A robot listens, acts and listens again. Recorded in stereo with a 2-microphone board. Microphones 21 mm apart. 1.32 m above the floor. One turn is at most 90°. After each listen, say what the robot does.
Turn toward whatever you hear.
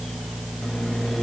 Turn 40° left.
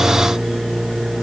Facing the microwave.